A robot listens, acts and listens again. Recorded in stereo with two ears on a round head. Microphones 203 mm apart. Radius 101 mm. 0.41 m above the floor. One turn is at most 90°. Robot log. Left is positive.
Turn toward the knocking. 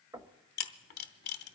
note: The knocking: about 15° right or 165° right.
cmd yaw -15
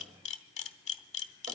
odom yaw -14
cmd idle
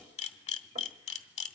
note: So it is at 150° right.
cmd yaw -90
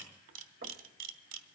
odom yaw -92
note: Nothing new. It was at 60° right.
cmd yaw -60
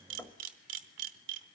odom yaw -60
end: Found it: knocking, straight ahead.